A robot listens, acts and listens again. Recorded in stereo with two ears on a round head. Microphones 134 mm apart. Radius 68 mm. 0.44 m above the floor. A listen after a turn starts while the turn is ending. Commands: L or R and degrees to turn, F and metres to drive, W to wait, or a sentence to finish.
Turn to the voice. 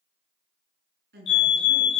R90
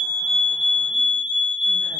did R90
W
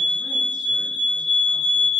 W
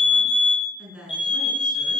Facing the woman speaking.